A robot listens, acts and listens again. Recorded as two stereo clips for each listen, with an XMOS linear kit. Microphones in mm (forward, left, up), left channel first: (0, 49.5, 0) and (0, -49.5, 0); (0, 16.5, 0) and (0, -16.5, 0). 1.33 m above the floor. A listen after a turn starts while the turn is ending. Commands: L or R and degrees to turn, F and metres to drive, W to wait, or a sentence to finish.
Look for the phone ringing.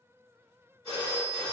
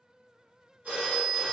R90
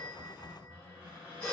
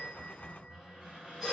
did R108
L10
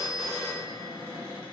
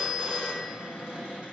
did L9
Facing the phone ringing, 1 to 2 m away.